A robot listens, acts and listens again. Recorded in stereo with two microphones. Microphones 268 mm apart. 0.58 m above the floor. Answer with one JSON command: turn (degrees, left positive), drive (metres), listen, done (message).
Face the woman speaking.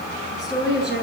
{"turn": -40}
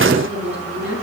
{"turn": -95}
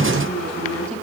{"done": "Facing the woman speaking, over 4 m away."}